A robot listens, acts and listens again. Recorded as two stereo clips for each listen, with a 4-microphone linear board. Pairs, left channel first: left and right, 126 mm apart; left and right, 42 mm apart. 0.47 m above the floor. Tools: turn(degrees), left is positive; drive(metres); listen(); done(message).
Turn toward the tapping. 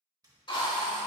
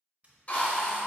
turn(degrees=-30)
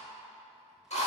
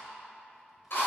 listen()
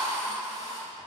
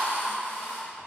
listen()
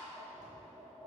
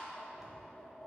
done("Found it: tapping, straight ahead.")